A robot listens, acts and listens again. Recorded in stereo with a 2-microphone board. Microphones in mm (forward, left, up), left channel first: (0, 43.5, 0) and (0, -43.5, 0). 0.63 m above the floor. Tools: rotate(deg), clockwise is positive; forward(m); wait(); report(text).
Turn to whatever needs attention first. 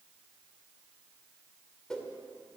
wait()
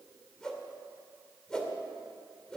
wait()
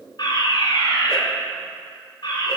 rotate(-60)
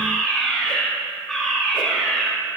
rotate(-10)
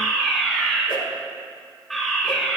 report("Facing the fire alarm, over 4 m away.")